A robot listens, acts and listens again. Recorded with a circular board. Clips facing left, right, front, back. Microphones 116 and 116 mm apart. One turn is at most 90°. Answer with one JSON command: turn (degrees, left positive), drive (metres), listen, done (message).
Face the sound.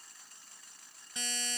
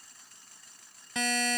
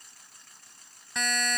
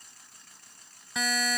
{"turn": -90}
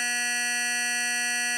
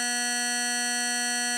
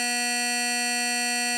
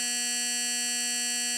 {"turn": -15}
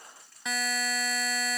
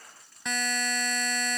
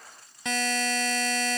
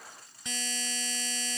{"done": "Facing the buzzer."}